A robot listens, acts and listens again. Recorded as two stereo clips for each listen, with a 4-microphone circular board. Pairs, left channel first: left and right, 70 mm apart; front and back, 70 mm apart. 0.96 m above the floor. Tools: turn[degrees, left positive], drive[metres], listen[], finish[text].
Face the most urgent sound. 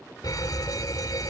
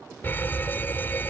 Thought: The fire alarm: 60° left.
Action: turn[60]
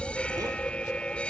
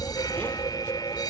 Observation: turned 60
Thought: The fire alarm is now 15° left.
Action: turn[15]
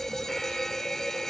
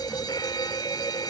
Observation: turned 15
Action: finish[Facing the fire alarm.]